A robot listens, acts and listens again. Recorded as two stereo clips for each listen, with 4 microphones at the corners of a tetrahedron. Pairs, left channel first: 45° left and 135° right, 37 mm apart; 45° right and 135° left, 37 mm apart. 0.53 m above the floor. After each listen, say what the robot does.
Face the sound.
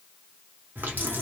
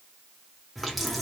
Turn 135° right.
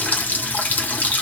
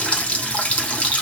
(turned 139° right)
Facing the running tap, under 1 m away.